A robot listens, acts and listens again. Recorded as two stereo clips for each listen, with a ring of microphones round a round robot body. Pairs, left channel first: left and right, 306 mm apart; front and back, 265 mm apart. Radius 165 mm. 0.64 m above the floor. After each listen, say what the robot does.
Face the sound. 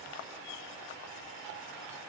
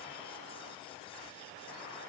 Keep listening.
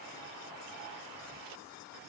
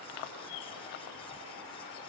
Keep listening.
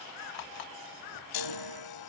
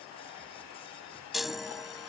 Turn 90° left.
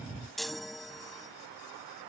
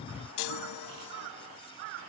Facing the chime.